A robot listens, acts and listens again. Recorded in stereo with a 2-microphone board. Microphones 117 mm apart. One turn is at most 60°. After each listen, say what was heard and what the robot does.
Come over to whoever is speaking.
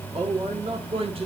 The man speaking: about 55° right or 125° right. Turn 55° right.
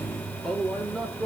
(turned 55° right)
Drive 1.0 m forward.
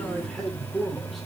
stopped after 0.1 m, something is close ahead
Something is in my way. I am facing the man speaking but have not reached it.